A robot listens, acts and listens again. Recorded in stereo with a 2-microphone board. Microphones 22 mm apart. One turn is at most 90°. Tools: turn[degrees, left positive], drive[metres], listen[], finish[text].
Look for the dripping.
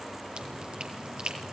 Thought: The dripping: about 45° right or 135° right.
Action: turn[-45]
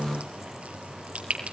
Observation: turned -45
Thought: So it is at 85° right.
Action: turn[-85]
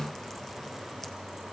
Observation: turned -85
Action: listen[]
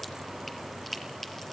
Thought: The dripping is now 10° left.
Action: turn[10]
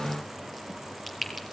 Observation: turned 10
Action: finish[Found it: dripping, straight ahead.]